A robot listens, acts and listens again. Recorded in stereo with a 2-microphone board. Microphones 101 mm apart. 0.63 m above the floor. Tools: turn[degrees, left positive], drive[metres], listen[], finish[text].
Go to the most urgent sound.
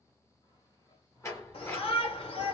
Thought: The shout: about 70° left or 110° left.
Action: turn[70]
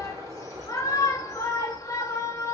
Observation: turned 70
Thought: So it is at 35° left.
Action: turn[35]
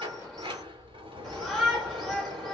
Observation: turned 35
Action: drive[1.0]
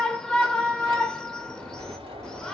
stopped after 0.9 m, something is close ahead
Thought: The shout is now 10° left.
Action: turn[10]
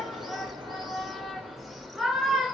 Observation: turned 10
Action: finish[Arrived at the shout, straight ahead.]